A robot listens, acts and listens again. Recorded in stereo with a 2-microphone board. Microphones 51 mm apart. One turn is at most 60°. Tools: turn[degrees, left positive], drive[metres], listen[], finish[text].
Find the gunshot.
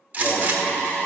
Thought: The gunshot: about 30° right or 150° right.
Action: turn[-30]
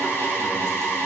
Action: listen[]
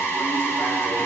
Action: finish[I heard a gunshot, but can't make it out now. It was about straight ahead or 120° right.]